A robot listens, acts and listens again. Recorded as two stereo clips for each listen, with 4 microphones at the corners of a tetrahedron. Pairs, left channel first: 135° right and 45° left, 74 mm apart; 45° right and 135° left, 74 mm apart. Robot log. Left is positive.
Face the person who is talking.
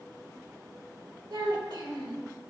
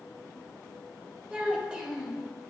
note: The child speaking: 60° left.
cmd yaw +60
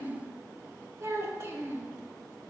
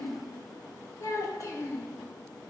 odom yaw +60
end: Facing the child speaking, 1 to 2 m away.